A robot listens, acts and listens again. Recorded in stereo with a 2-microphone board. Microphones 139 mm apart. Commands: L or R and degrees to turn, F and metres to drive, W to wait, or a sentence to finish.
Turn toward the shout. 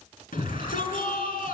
L90
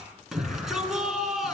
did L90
Found it: a shout, straight ahead.